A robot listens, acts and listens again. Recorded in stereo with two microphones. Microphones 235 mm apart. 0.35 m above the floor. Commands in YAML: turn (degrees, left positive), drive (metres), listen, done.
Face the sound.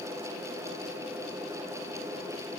listen: true
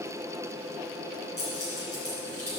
turn: 90
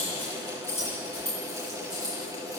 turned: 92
turn: 10
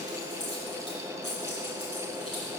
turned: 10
done: "Facing the keys jangling, over 4 m away."